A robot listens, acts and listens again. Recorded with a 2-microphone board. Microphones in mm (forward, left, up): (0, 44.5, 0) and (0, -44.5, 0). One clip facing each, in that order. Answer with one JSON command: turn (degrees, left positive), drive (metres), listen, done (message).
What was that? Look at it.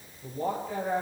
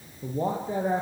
{"turn": -30}
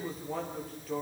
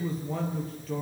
{"done": "Found it: a man speaking, straight ahead."}